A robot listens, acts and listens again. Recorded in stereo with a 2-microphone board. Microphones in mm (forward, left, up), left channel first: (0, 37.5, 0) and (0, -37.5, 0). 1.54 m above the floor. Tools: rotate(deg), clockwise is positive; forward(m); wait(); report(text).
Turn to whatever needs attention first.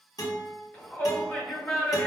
rotate(-30)
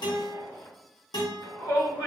rotate(-120)
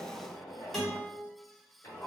rotate(-35)
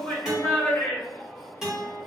rotate(-20)
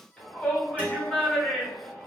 rotate(-10)
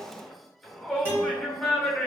report("Facing the shout, 1 to 2 m away.")